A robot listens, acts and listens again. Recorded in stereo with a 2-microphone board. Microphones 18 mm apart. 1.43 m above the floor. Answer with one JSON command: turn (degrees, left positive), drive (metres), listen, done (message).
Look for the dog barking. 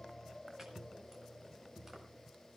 {"listen": true}
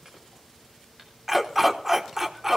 {"turn": -25}
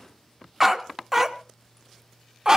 {"turn": -35}
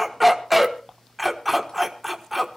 {"turn": -10}
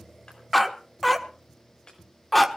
{"done": "Facing the dog barking, 1 to 2 m away."}